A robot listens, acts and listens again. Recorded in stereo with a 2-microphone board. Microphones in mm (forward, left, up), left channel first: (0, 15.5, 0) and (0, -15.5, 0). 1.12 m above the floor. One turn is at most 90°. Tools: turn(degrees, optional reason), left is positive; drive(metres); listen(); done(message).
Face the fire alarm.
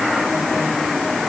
listen()
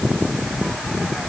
listen()
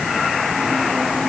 done("I can't make out a fire alarm to turn to.")